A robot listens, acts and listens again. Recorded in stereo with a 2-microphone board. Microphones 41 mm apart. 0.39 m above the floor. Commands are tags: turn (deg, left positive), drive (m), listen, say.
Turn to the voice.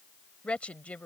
<turn deg="35"/>
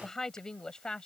<turn deg="20"/>
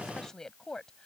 <turn deg="15"/>
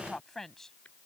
<turn deg="10"/>
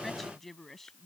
<turn deg="10"/>
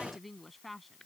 <say>Facing the woman speaking.</say>